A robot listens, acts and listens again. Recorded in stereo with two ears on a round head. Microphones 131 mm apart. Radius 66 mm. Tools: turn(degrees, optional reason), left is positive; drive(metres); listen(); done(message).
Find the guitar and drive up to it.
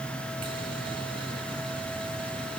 listen()
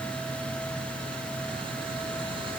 listen()
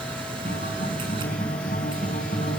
turn(degrees=55, reason="The guitar: about 55° left or 125° left.")
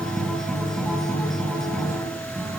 drive(metres=1.0)
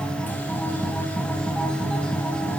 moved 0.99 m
drive(metres=1.0)
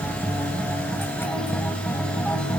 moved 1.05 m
drive(metres=1.0)
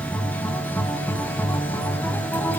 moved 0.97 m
turn(degrees=15, reason="The guitar is now 15° left.")
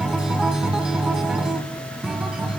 drive(metres=1.0)
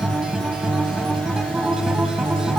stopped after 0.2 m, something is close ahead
done("I am next to the guitar.")